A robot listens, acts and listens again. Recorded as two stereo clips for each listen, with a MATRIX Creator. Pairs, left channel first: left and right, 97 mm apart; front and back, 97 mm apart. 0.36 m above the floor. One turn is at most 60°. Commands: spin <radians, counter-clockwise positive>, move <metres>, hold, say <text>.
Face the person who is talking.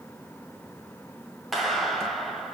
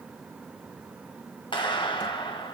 hold
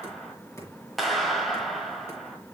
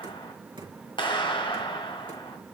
hold
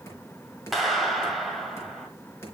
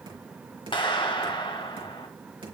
say I can't make out anyone speaking, only a clap and knocking.